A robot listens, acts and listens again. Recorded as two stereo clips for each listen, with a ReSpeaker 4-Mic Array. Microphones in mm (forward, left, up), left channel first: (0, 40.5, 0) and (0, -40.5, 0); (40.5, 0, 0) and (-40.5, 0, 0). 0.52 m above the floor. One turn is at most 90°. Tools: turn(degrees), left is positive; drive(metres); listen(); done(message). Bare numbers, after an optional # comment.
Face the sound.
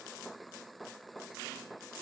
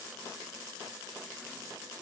listen()
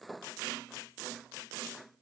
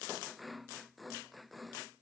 listen()
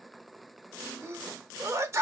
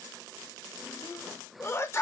# The sneeze: 45° right.
turn(-45)
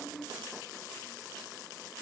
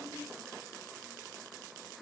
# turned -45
done("I heard a sneeze from this way, but can't make it out now.")